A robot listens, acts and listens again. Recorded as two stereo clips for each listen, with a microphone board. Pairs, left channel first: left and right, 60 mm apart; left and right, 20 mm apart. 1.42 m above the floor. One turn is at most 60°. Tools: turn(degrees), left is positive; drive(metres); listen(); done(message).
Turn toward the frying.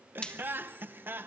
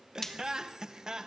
turn(degrees=15)
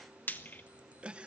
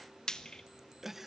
turn(degrees=60)
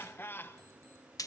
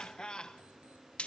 turn(degrees=60)
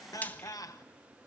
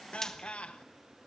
turn(degrees=30)
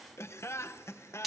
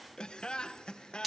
done("Facing the frying, 1 to 2 m away.")